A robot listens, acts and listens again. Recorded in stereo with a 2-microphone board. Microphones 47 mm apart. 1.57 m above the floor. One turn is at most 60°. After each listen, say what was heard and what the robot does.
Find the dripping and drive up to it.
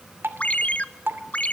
The dripping: about 50° right or 130° right. Turn 50° right.
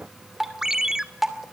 Drive 1.0 m forward.
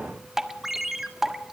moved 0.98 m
The dripping is now 10° right. Turn 10° right.
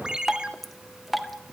Drive 1.0 m forward.
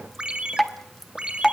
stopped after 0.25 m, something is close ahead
I am next to the dripping.